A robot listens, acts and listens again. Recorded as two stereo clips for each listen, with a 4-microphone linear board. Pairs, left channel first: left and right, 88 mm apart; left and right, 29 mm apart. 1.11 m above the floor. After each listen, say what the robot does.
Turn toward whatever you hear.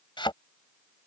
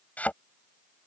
Turn 70° left.
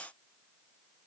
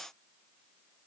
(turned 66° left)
Keep listening.
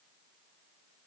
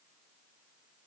I heard a thud, but can't make it out now. It was about straight ahead or 45° left.